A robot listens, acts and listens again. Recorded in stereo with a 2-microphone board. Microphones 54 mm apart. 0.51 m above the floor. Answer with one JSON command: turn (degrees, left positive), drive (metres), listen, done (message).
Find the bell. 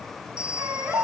{"turn": -20}
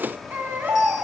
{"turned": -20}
{"listen": true}
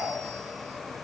{"listen": true}
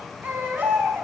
{"done": "I heard a bell, but can't make it out now. It was about straight ahead or 140° right."}